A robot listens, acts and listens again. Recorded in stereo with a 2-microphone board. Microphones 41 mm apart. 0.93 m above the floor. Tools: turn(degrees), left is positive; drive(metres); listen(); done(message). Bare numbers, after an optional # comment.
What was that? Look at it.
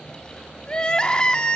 # The crying: about 25° left or 155° left.
turn(25)
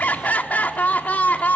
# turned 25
# So it is at 135° left.
turn(135)
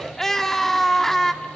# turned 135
# The crying is now 10° left.
turn(10)
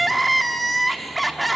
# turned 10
done("Found it: crying, straight ahead, 1 to 2 m away.")